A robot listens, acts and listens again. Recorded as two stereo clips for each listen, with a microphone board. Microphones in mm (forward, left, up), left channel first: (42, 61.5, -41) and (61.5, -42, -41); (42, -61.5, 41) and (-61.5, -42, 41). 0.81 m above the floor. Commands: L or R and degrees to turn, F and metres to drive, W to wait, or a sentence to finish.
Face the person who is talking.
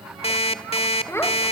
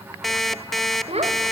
L165
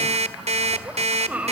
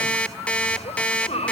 Facing the child speaking, 2 to 4 m away.